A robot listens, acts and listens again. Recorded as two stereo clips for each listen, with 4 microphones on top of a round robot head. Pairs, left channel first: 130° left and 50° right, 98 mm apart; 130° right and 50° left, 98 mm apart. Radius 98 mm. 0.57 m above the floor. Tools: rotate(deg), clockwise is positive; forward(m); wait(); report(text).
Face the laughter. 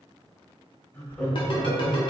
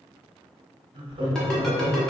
rotate(-45)
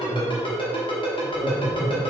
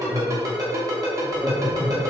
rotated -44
rotate(45)
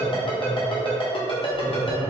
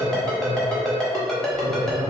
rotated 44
wait()
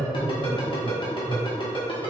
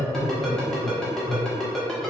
rotate(35)
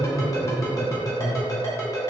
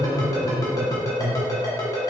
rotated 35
report("Found it: laughter, straight ahead, 1 to 2 m away.")